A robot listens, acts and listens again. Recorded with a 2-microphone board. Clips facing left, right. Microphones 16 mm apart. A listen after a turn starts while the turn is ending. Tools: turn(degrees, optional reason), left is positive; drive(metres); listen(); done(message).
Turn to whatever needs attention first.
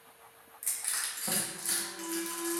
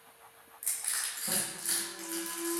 turn(degrees=65, reason="The alarm: about 65° left or 115° left.")
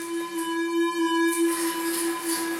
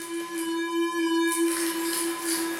turn(degrees=10, reason="So it is at 10° left.")
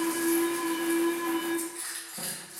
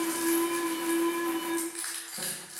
done("Facing the alarm, under 1 m away.")